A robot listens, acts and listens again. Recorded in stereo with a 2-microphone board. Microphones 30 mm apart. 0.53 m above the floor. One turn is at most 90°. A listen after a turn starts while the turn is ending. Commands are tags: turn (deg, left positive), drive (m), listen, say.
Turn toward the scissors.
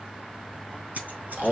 <turn deg="-65"/>
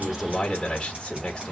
<listen/>
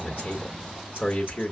<listen/>
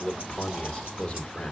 <say>I heard scissors, but can't make it out now. It was about straight ahead or 50° right.</say>